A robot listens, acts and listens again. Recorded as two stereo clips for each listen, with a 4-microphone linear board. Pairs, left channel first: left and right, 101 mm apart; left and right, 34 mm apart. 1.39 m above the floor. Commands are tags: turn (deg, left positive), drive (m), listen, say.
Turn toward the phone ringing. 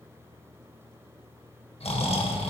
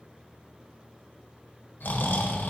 <listen/>
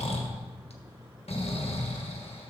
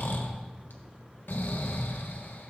<listen/>
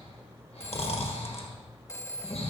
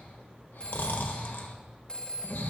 <turn deg="25"/>
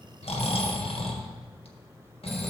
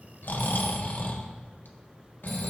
<listen/>
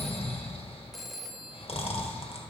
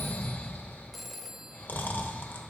<say>Found it: a phone ringing, straight ahead, under 1 m away.</say>